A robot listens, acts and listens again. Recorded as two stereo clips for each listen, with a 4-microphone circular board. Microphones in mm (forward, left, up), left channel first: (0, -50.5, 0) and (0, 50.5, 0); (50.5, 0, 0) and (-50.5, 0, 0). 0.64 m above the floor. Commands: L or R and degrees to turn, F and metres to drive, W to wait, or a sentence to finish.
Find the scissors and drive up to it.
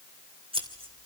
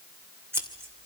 L115
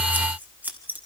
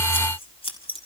L15
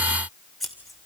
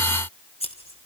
F1.0
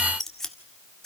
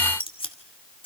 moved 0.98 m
F1.0
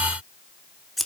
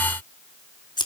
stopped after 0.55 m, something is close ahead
Arrived at the scissors, straight ahead.